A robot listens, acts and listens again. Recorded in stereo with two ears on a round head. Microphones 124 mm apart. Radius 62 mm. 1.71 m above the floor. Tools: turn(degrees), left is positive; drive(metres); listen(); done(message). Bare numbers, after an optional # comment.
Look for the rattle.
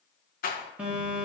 # The rattle: about 70° left or 110° left.
turn(70)
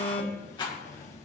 # So it is at 35° left.
turn(35)
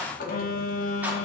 # The rattle is now 10° right.
turn(-10)
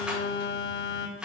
done("Facing the rattle, 1 to 2 m away.")